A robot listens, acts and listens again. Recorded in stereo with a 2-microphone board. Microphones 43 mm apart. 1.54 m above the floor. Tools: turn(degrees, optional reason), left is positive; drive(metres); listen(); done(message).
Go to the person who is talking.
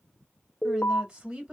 turn(degrees=-25, reason="The woman speaking: about 25° right or 155° right.")
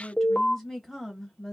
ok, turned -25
drive(metres=1.0)
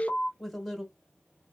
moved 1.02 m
drive(metres=1.0)
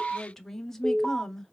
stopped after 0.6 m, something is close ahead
turn(degrees=10, reason="The woman speaking is now 10° left.")
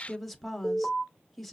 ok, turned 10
done("Arrived at the woman speaking, straight ahead.")